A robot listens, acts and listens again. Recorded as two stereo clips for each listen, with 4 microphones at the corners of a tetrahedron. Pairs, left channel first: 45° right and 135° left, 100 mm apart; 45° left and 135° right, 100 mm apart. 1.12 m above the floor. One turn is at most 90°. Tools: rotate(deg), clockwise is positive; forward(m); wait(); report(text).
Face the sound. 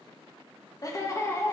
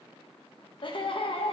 rotate(-20)
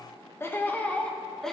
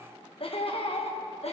rotate(-40)
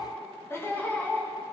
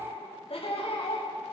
rotate(-30)
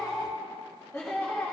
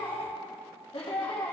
rotate(-25)
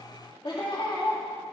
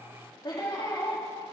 rotate(10)
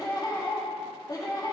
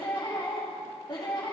report("Facing the laughter.")